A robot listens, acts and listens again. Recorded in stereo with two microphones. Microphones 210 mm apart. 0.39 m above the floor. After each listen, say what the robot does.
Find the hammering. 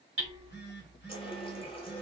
Turn 75° right.
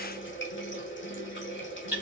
Turn 10° right.
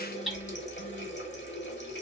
Found it: hammering, straight ahead, 1 to 2 m away.